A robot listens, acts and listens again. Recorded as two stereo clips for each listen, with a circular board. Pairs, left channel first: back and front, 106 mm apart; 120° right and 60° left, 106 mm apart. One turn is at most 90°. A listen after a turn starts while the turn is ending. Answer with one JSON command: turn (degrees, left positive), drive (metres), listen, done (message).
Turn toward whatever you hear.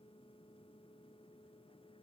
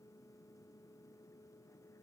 {"listen": true}
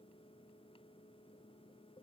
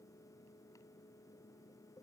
{"listen": true}
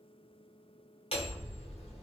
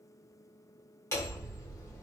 {"turn": 90}
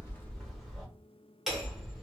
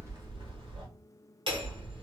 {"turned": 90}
{"turn": 85}
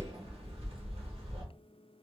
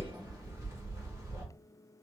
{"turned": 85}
{"done": "Facing the hammering."}